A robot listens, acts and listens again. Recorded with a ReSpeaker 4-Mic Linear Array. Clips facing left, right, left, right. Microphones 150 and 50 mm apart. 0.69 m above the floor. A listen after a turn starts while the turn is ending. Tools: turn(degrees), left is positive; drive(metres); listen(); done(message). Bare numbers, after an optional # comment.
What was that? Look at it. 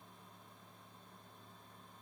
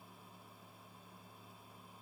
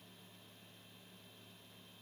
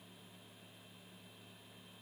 listen()
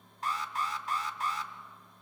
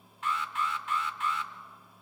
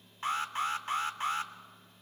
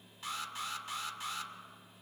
# The alarm: about 40° left or 140° left.
turn(40)
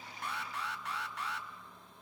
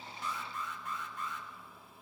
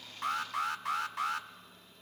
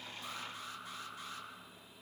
# So it is at 100° left.
turn(100)
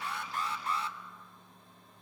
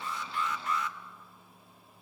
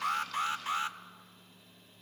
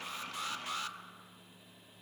# The alarm is now 30° left.
turn(30)
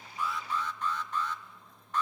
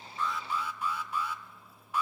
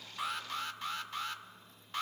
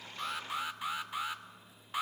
# The alarm is now 10° right.
turn(-10)
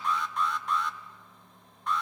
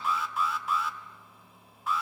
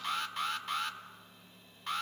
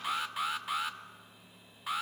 done("Facing the alarm, 1 to 2 m away.")